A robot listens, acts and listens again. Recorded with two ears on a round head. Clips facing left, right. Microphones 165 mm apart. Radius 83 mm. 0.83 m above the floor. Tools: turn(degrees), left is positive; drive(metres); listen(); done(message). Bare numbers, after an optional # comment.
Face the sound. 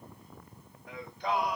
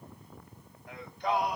# The singing: about 70° left or 110° left.
turn(70)
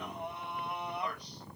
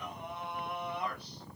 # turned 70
# So it is at 15° left.
turn(15)
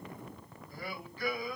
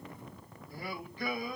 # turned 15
# The singing is now 25° right.
turn(-25)
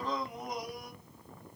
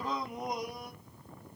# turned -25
# The singing is now 25° right.
turn(-25)
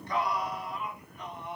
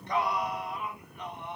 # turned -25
# The singing is now 20° right.
turn(-20)
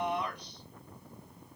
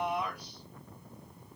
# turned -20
done("Facing the singing, 1 to 2 m away.")